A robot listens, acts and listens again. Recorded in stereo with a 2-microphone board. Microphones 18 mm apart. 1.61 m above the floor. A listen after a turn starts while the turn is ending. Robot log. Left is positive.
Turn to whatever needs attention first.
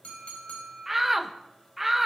cmd yaw -30
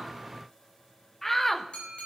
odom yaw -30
note: So it is at 15° left.
cmd yaw +15
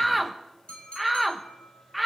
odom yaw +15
end: Facing the shout.